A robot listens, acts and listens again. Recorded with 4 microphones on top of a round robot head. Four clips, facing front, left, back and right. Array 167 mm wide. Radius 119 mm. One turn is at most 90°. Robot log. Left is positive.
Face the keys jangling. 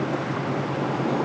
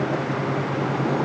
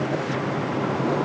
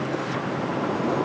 cmd idle
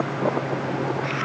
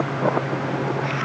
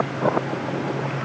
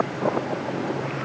cmd idle
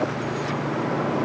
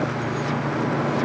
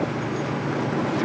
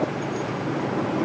end: I can't make out keys jangling to turn to.